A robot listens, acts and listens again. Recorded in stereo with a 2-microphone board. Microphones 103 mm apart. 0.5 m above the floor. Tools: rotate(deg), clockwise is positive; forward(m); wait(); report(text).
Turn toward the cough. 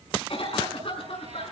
rotate(-65)
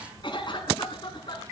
rotate(-50)
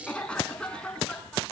rotate(-10)
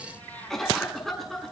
report("Found it: a cough, straight ahead.")